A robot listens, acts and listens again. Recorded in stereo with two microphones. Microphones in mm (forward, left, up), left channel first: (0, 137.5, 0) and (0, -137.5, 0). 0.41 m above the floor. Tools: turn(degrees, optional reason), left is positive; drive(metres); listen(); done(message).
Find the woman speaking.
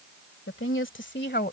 turn(degrees=35, reason="The woman speaking: about 35° left or 145° left.")
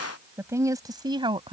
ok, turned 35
turn(degrees=-20, reason="So it is at 20° right.")
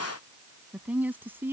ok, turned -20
turn(degrees=-10, reason="The woman speaking is now 10° right.")
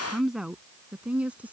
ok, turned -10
done("Found it: a woman speaking, straight ahead.")